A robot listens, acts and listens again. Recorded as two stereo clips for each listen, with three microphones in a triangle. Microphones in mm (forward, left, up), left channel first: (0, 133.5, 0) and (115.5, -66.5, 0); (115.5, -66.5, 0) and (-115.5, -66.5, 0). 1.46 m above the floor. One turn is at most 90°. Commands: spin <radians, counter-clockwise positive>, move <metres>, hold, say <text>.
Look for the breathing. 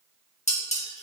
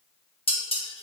hold
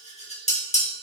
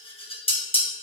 hold
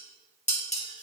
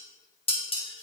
say I can't make out breathing, only dishes clattering.